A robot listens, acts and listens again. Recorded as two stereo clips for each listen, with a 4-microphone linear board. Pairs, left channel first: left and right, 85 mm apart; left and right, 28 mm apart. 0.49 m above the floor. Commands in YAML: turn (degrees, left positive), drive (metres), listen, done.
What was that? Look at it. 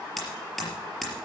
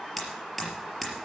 turn: 30
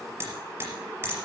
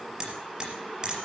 turn: -30
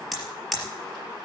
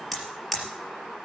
done: "Facing the hammering, over 4 m away."